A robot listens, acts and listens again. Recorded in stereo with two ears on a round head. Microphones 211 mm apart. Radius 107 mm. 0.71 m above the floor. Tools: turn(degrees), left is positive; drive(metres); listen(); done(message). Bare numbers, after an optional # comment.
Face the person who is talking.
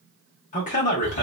# The man speaking: about 30° left or 150° left.
turn(30)
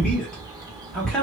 done("Facing the man speaking, 1 to 2 m away.")